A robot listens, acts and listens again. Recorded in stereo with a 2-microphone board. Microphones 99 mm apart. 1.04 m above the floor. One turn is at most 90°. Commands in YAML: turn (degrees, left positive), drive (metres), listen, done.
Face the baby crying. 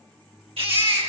turn: -70
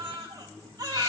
turn: -40
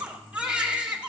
turn: -10
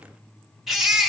done: "Found it: a baby crying, straight ahead."